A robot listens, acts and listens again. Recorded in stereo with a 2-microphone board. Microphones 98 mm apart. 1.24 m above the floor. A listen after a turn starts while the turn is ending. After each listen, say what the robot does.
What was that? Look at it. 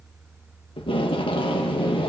Turn 60° left.
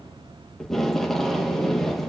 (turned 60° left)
Found it: tape being pulled, straight ahead.